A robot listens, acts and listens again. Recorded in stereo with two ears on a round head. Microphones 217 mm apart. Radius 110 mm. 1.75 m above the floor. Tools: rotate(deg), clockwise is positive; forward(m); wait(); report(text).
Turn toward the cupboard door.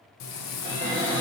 rotate(20)
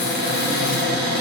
rotate(140)
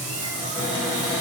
report("Facing the cupboard door, 1 to 2 m away.")